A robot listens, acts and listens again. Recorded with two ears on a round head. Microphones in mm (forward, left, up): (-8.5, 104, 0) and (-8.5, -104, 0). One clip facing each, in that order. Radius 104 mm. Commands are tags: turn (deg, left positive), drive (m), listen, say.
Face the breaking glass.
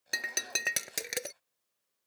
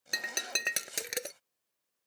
<turn deg="-30"/>
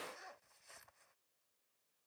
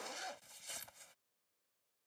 <listen/>
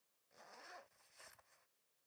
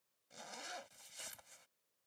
<say>I heard breaking glass, but can't make it out now. It was about 25° left or 145° right.</say>